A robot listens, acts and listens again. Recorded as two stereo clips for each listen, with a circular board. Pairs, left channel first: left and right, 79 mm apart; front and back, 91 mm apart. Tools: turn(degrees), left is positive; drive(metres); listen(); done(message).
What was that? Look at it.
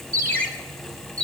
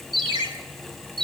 turn(degrees=160)
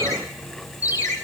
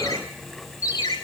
turn(degrees=50)
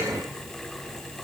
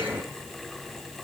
listen()
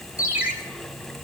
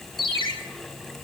turn(degrees=-20)
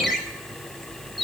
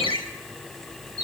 done("Found it: a ringtone, straight ahead, 2 to 4 m away.")